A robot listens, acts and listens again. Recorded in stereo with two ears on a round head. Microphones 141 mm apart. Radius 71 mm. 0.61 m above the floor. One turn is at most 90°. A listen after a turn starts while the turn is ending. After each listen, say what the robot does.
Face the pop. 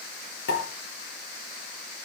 Turn 90° left.
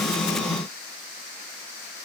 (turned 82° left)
Turn 10° left.
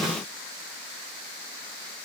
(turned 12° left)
I heard a pop from this way, but can't make it out now.